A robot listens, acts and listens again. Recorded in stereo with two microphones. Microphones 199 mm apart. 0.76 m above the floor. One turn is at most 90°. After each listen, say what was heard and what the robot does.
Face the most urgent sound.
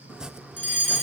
The fire alarm: about 35° left or 145° left. Turn 35° left.
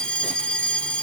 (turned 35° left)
Facing the fire alarm, 2 to 4 m away.